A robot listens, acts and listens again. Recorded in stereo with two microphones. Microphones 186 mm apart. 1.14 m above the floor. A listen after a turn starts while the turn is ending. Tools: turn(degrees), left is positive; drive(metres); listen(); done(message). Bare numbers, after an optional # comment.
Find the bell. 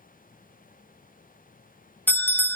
turn(30)
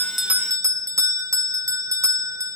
# So it is at 15° right.
turn(-15)
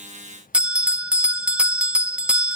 done("Found it: a bell, straight ahead.")